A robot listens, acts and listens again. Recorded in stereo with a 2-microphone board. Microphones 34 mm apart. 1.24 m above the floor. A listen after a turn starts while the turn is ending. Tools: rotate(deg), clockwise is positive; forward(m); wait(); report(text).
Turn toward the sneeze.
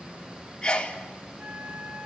rotate(-25)
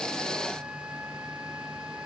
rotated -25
wait()
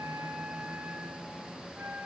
report("I heard a sneeze, but can't make it out now. It was about straight ahead or 130° left.")